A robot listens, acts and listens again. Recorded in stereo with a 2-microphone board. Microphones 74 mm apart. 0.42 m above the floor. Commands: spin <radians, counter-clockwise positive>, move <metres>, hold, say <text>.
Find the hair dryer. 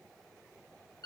hold
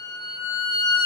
hold
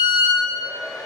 spin 1.13
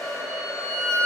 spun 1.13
spin 0.87
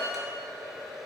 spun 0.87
say Facing the hair dryer.